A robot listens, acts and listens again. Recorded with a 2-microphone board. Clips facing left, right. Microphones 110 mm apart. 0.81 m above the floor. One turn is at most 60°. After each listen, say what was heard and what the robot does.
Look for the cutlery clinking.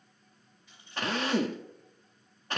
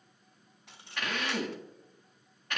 Turn 60° right.
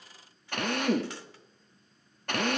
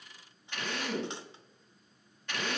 Nothing new. It was at 30° right. Turn 30° right.
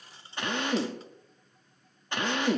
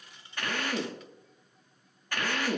The cutlery clinking is now 35° left. Turn 35° left.
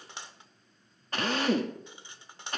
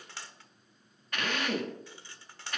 The cutlery clinking is now 20° left. Turn 20° left.
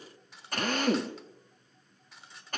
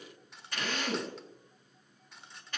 Found it: cutlery clinking, straight ahead, 1 to 2 m away.